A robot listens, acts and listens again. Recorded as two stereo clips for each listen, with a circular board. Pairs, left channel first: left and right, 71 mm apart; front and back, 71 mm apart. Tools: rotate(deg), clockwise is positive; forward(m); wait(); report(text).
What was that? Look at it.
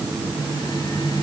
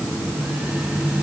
wait()
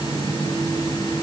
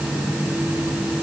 wait()
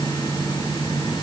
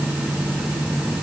report("I can't make out anything.")